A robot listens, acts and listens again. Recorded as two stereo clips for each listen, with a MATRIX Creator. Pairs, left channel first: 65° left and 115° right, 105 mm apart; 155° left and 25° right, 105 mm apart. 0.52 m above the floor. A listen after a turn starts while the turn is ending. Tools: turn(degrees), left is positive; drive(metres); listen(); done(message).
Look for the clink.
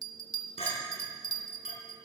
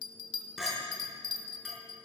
turn(degrees=65)
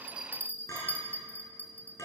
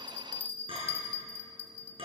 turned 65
done("Facing the clink.")